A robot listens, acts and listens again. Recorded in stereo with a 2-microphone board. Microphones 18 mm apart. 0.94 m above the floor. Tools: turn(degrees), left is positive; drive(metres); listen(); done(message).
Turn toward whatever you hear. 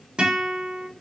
turn(degrees=-65)
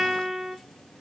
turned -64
done("Facing the guitar.")